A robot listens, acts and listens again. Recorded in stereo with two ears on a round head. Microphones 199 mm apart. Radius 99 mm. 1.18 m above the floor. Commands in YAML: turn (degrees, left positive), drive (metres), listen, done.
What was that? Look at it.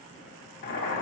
turn: 50
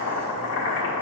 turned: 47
turn: 75
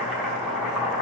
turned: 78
done: "Facing the boiling."